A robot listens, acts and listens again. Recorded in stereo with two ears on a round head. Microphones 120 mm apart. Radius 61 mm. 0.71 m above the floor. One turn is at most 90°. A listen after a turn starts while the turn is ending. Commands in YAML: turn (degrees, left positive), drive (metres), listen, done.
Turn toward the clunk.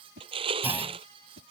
turn: -15
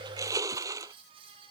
listen: true
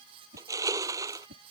done: "I heard a clunk, but can't make it out now. It was about straight ahead or 150° right."